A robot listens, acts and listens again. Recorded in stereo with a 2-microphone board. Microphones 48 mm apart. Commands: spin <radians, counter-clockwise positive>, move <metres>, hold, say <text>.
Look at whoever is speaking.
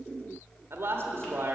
spin -1.05
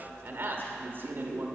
spin -0.87
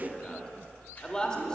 spin 0.35
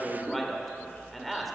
say Found it: a man speaking, straight ahead.